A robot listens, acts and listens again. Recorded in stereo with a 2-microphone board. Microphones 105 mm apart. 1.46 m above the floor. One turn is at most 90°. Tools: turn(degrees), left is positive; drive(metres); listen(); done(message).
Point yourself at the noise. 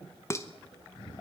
turn(degrees=25)
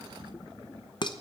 turn(degrees=90)
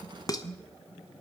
turn(degrees=40)
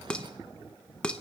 turn(degrees=10)
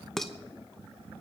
done("Found it: dishes clattering, straight ahead, under 1 m away.")